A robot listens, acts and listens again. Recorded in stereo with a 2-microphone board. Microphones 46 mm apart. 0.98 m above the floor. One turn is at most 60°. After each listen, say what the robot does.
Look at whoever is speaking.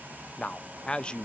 Turn 20° left.
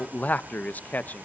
Turn 60° left.
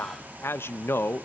Turn 60° left.
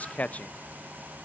Turn 40° left.
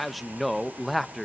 Facing the man speaking, under 1 m away.